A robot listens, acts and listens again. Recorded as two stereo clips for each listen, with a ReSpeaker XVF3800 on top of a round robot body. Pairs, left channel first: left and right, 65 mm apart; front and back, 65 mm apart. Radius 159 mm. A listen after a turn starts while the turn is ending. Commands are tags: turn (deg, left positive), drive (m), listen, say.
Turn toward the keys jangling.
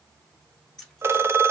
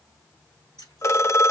<say>Facing the keys jangling, 2 to 4 m away.</say>